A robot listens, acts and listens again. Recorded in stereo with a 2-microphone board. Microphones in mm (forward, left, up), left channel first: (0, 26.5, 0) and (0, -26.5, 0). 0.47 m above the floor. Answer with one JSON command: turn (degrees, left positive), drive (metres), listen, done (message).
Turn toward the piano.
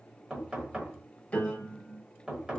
{"turn": 25}
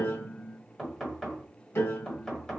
{"turn": 130}
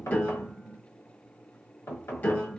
{"turn": 35}
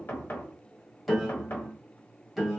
{"done": "Facing the piano, 1 to 2 m away."}